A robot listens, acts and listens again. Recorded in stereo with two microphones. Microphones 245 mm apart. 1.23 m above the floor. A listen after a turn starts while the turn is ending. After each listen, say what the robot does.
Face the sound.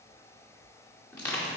Turn 30° left.
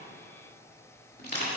Turn 140° left.
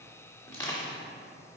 Turn 10° left.
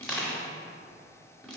Found it: crushing, straight ahead.